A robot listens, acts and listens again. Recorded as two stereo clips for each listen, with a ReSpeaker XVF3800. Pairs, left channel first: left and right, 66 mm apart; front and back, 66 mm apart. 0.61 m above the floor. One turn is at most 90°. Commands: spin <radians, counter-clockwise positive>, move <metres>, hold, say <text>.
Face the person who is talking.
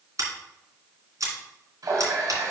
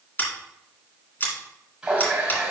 hold
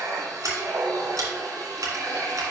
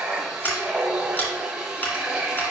hold
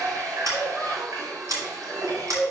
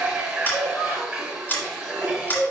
spin 0.17
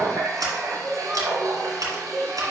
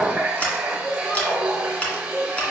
say Found it: a child speaking, straight ahead, 2 to 4 m away.